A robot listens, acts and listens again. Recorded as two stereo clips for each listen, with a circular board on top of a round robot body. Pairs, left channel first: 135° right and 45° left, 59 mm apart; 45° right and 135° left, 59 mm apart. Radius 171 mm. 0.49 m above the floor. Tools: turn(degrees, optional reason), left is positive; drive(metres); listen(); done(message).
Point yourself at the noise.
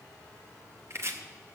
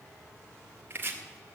turn(degrees=80, reason="The chopping: 80° left.")
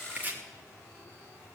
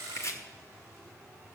turn(degrees=-15, reason="The chopping is now 15° right.")
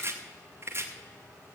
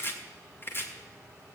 done("Found it: chopping, straight ahead, 1 to 2 m away.")